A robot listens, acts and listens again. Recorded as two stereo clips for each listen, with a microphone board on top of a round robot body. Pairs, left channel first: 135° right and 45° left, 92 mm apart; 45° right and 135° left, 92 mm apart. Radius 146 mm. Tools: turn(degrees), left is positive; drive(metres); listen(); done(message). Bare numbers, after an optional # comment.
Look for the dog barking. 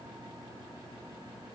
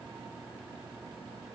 listen()
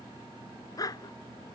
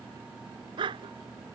# The dog barking: 175° left.
turn(175)
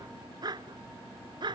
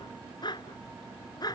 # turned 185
done("Found it: a dog barking, straight ahead.")